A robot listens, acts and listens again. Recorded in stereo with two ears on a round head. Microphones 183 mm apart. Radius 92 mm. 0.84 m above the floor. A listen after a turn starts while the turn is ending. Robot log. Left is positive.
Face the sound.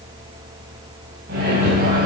note: The microwave: about 55° right or 125° right.
cmd yaw -55
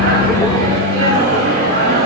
note: So it is at 70° right.
cmd yaw -70
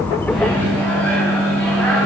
note: The microwave is now 10° left.
cmd yaw +10
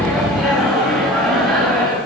end: Found it: a microwave, straight ahead.